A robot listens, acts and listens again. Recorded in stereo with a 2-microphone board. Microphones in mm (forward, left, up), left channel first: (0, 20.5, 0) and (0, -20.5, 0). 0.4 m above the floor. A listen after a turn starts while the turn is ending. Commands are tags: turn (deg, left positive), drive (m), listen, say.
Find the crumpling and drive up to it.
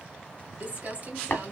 <turn deg="-40"/>
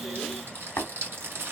<turn deg="-95"/>
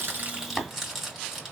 <turn deg="-10"/>
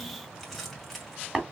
<drive m="1.0"/>
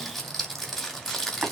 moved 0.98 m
<drive m="1.0"/>
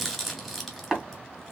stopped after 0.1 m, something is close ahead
<say>Arrived at the crumpling, straight ahead.</say>